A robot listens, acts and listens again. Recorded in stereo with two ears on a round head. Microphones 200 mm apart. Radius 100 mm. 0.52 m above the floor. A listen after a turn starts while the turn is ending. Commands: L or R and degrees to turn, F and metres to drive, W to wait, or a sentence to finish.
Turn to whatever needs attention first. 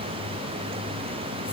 W
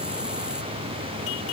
W
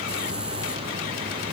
I can't make out anything urgent to turn to.